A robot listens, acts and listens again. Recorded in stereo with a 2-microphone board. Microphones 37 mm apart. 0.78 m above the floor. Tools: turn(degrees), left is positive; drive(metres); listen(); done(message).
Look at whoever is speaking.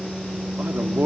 turn(degrees=-55)
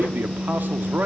turn(degrees=-60)
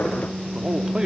turn(degrees=-15)
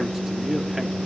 listen()
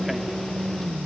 listen()
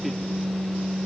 done("I heard a man speaking from this way, but can't make it out now.")